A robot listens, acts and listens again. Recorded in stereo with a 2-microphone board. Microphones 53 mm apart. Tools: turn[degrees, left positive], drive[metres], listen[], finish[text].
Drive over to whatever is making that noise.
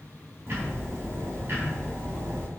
Thought: The ticking: about 40° right or 140° right.
Action: turn[-40]
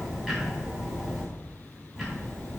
Action: drive[1.0]
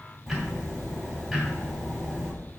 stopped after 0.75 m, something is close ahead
Action: finish[Something is in my way. I am facing the ticking but have not reached it.]